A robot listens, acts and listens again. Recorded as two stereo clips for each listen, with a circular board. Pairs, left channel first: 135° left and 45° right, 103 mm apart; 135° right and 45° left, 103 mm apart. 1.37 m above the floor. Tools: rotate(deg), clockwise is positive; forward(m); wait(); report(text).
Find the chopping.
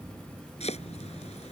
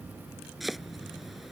rotate(-135)
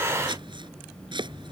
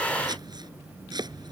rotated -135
report("Facing the chopping.")